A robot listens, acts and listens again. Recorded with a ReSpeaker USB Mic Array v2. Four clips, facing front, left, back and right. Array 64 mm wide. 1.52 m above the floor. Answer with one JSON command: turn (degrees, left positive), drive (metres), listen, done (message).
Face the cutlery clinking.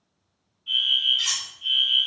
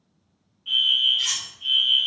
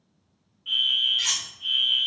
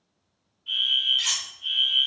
{"turn": -170}
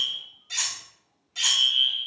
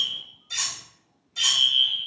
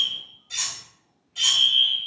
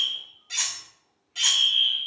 {"turn": -65}
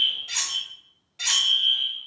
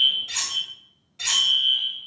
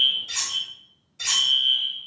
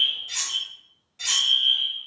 {"done": "Found it: cutlery clinking, straight ahead, 1 to 2 m away."}